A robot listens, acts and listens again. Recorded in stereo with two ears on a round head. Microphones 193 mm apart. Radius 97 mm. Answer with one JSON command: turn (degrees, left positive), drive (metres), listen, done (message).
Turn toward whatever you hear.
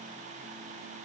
{"listen": true}
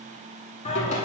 {"turn": 35}
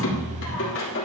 {"turn": 110}
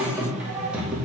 {"done": "Found it: singing, straight ahead, 2 to 4 m away."}